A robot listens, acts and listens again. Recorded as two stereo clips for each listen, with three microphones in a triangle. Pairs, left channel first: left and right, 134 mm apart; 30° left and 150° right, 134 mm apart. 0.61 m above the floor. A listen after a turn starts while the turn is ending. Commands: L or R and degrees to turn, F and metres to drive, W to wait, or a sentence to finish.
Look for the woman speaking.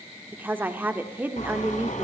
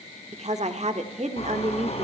R165
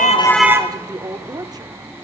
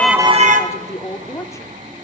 R35
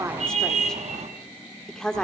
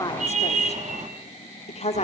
Found it: a woman speaking, straight ahead, 1 to 2 m away.